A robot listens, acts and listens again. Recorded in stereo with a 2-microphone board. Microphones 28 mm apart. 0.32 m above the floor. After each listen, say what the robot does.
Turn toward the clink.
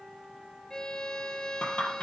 Turn 50° left.
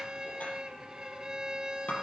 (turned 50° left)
Turn 80° left.
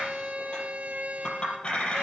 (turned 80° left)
Turn 35° left.
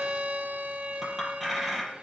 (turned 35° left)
Facing the clink.